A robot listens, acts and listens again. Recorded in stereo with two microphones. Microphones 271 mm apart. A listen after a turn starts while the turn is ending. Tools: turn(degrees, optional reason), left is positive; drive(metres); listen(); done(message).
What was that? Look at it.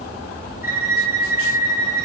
turn(degrees=30, reason="The violin: about 30° left or 150° left.")
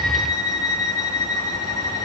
turn(degrees=120, reason="So it is at 120° left.")
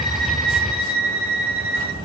done("Facing the violin, over 4 m away.")